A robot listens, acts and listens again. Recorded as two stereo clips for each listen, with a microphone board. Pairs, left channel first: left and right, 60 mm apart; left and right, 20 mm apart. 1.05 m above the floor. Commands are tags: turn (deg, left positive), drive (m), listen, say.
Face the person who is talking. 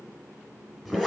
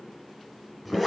<listen/>
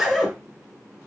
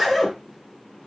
<listen/>
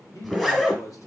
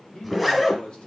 <turn deg="70"/>
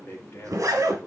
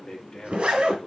<turn deg="50"/>
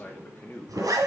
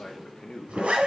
<turn deg="30"/>
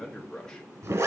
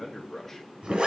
<say>Facing the man speaking.</say>